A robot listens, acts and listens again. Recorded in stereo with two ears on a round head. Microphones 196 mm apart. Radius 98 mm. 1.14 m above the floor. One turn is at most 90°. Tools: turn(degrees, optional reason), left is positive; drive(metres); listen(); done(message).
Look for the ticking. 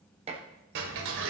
turn(degrees=-65, reason="The ticking: about 65° right or 115° right.")
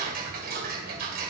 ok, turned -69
turn(degrees=-45, reason="So it is at 45° right.")
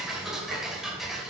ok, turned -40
done("Found it: ticking, straight ahead, 2 to 4 m away.")